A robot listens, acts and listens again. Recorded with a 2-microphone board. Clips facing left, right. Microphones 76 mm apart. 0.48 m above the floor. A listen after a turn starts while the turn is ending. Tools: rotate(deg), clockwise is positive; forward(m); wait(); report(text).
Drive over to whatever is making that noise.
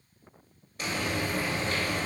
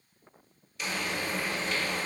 rotate(-45)
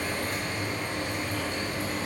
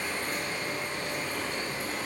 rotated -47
rotate(-80)
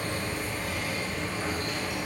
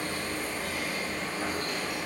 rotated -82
forward(1.0)
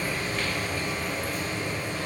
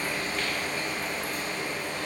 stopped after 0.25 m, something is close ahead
report("Blocked. The frying is further on, straight ahead.")